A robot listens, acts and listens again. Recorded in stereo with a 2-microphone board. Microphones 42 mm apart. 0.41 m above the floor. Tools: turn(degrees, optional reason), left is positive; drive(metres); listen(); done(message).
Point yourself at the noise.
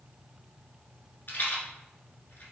turn(degrees=45, reason="The rattle: about 45° left or 135° left.")
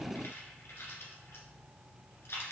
turn(degrees=95, reason="So it is at 95° left.")
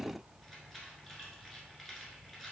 listen()
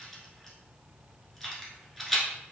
turn(degrees=10, reason="The rattle is now 10° left.")
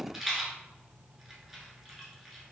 done("Facing the rattle.")